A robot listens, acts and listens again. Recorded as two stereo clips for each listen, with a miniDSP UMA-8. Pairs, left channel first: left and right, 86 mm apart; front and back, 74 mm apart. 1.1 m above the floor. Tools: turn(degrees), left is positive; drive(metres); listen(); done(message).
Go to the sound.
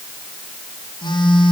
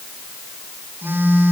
turn(degrees=115)
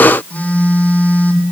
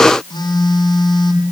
turn(degrees=15)
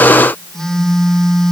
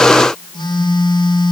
drive(metres=1.0)
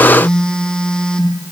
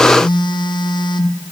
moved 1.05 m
turn(degrees=10)
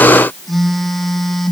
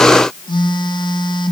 drive(metres=1.0)
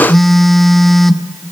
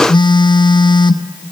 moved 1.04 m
drive(metres=1.0)
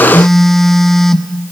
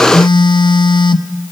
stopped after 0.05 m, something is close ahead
done("I am next to the phone buzzing.")